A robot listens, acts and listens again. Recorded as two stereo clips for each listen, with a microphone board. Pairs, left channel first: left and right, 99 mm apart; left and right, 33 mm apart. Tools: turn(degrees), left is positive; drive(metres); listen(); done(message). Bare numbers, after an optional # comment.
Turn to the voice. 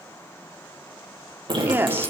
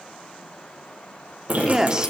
# The woman speaking: about 20° right or 160° right.
turn(-20)
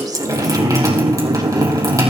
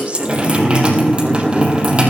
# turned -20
listen()
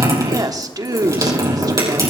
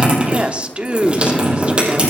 # So it is at 135° right.
turn(-135)
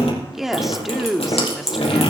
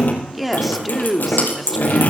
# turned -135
done("Found it: a woman speaking, straight ahead, 1 to 2 m away.")